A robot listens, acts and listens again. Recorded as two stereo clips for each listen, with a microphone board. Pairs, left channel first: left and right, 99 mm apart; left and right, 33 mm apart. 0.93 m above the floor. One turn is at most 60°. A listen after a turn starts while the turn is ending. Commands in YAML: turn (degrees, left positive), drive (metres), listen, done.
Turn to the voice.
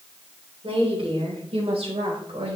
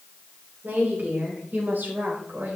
turn: -60
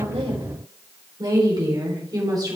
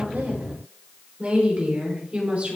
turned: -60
turn: -40
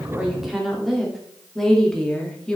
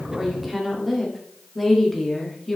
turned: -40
turn: 10
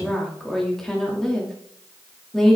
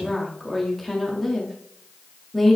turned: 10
done: "Found it: a woman speaking, straight ahead."